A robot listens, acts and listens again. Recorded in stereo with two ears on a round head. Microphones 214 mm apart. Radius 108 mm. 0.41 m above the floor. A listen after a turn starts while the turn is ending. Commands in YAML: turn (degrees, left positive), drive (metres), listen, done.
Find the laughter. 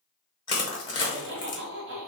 turn: -50
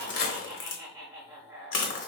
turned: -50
turn: -15
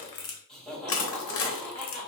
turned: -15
done: "Facing the laughter."